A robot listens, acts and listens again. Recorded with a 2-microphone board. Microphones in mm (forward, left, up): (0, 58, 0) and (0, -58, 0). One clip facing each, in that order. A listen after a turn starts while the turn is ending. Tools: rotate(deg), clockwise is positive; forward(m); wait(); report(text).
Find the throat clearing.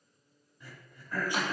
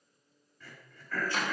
rotate(-15)
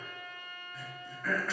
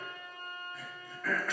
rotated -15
report("Found it: throat clearing, straight ahead, 2 to 4 m away.")